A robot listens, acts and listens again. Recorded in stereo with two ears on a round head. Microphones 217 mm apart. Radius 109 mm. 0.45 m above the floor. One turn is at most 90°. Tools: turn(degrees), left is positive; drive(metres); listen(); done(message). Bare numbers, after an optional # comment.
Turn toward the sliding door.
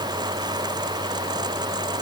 listen()
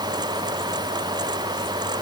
listen()
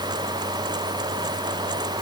done("I can't make out a sliding door to turn to.")